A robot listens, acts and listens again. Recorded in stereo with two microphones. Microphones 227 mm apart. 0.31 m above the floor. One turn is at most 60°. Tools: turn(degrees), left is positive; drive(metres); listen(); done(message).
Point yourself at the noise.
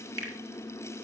turn(degrees=-60)
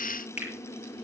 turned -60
turn(degrees=-10)
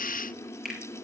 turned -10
done("Facing the finger snap.")